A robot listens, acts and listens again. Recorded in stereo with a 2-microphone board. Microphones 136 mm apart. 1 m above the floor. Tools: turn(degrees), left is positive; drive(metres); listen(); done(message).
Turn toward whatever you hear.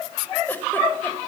listen()
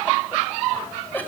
turn(degrees=30)
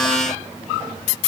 listen()
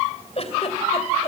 turn(degrees=130)
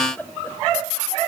turn(degrees=10)
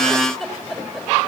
done("Found it: a giggle, straight ahead.")